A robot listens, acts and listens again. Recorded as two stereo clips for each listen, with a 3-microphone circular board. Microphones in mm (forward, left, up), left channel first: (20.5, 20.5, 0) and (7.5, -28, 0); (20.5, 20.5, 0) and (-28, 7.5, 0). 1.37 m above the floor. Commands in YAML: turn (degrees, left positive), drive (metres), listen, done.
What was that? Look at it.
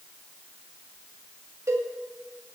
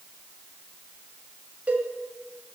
turn: -100
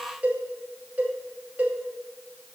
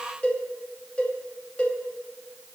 turn: -45
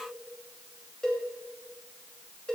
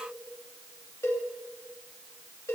done: "Found it: a cowbell, straight ahead."